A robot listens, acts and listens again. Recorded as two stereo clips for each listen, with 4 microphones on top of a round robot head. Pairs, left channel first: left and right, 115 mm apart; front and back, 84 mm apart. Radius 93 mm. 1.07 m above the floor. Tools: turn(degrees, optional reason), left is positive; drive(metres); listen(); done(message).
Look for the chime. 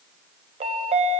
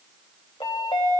turn(degrees=-60, reason="The chime: 60° right.")
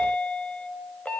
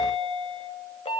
turn(degrees=10, reason="The chime is now 10° left.")
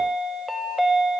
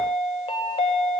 done("Found it: a chime, straight ahead, under 1 m away.")